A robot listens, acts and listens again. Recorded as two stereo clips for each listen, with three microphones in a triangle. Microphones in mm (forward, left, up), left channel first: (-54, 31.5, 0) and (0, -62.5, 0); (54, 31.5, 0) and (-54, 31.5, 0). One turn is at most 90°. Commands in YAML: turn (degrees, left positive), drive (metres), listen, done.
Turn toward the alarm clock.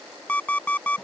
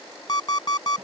turn: 45
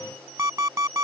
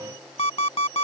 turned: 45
done: "Facing the alarm clock."